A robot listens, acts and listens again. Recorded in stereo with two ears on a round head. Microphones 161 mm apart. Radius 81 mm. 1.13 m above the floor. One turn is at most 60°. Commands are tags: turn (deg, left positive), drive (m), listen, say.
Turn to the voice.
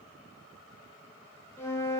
<listen/>
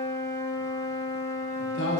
<turn deg="60"/>
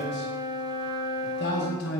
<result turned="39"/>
<turn deg="60"/>
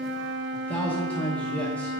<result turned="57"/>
<turn deg="10"/>
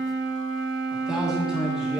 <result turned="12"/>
<say>Found it: a man speaking, straight ahead, 1 to 2 m away.</say>